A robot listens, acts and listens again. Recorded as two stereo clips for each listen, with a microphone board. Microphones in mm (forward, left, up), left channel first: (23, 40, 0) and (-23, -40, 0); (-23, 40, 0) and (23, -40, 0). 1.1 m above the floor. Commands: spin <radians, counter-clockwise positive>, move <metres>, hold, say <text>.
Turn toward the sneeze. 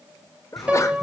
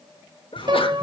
spin 2.01
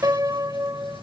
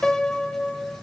say Facing where the sneeze came from. I can't hear it now.